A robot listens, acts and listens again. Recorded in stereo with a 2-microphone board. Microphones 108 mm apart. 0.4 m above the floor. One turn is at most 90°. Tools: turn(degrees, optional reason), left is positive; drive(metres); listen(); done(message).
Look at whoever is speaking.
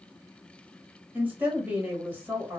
turn(degrees=-15, reason="The woman speaking: about 15° right or 165° right.")
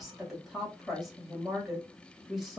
done("Facing the woman speaking.")